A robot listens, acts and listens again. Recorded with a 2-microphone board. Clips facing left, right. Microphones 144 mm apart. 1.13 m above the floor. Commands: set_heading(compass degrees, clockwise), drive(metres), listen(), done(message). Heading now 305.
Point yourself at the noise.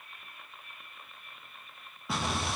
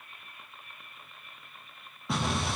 set_heading(275)
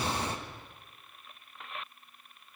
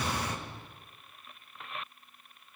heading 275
set_heading(125)
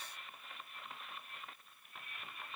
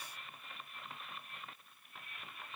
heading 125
done("Facing where the explosion came from. I can't hear it now.")